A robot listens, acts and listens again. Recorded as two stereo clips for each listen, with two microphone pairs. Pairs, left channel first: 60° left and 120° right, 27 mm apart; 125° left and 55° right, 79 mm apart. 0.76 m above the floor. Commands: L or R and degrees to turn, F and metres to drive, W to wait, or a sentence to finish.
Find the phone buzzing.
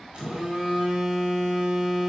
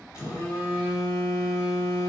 L180
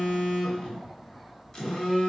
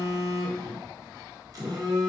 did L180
R15
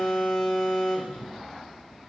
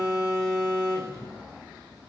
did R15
Found it: a phone buzzing, straight ahead.